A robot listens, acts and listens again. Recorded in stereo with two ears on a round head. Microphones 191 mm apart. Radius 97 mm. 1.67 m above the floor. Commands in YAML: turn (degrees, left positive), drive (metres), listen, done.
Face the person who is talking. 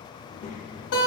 turn: 30
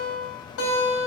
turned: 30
listen: true
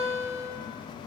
listen: true
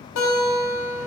done: "I heard a child speaking, but can't make it out now. It was about straight ahead or 120° left."